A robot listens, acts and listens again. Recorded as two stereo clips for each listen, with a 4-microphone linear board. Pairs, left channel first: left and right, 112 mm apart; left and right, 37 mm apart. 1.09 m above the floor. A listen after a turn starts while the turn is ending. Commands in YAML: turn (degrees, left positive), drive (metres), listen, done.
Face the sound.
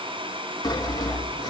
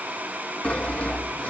turn: 35
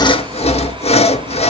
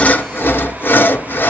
turn: 105
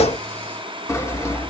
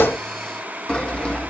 turn: 25
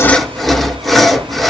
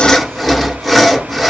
done: "Facing the sawing."